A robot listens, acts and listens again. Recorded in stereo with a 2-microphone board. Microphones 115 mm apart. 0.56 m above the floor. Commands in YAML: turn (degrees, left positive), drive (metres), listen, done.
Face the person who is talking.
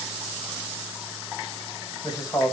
turn: 35
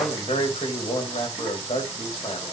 turn: 110
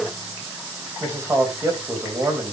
turn: -25
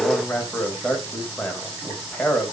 turn: 10
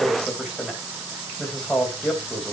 done: "Found it: a man speaking, straight ahead, 2 to 4 m away."